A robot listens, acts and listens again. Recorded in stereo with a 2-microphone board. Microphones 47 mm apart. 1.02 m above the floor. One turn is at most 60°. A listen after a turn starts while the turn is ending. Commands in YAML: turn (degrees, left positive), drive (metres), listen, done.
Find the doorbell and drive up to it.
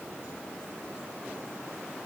listen: true
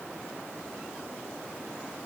listen: true
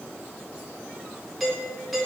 turn: 30
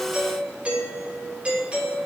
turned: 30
turn: -30
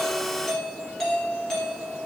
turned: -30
drive: 1.0
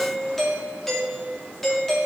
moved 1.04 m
drive: 1.0
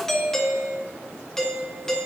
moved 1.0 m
turn: 10
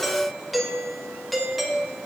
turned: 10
drive: 1.0
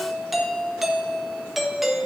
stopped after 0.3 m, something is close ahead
done: "Arrived at the doorbell, straight ahead."